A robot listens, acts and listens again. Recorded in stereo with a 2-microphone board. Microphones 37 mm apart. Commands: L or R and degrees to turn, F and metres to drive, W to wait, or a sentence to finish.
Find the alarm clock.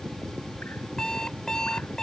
L20
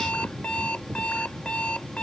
L145
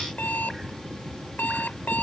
L60
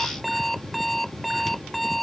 Found it: an alarm clock, straight ahead.